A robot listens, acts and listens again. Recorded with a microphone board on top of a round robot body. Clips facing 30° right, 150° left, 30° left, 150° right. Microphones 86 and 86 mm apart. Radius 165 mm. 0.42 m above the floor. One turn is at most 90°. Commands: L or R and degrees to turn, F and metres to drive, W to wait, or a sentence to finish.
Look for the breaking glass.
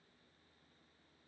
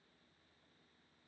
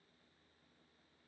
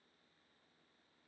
W
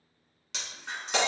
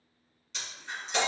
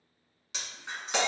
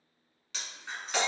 R45
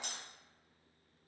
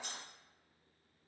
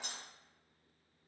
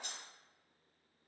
Facing the breaking glass.